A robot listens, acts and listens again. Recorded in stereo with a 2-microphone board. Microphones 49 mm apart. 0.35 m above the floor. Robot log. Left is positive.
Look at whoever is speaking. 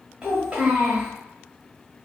note: The child speaking: about 20° right or 160° right.
cmd yaw -20
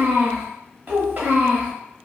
note: So it is at 135° right.
cmd yaw -135
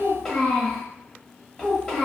note: The child speaking is now 10° left.
cmd yaw +10
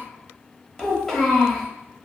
end: Found it: a child speaking, straight ahead, under 1 m away.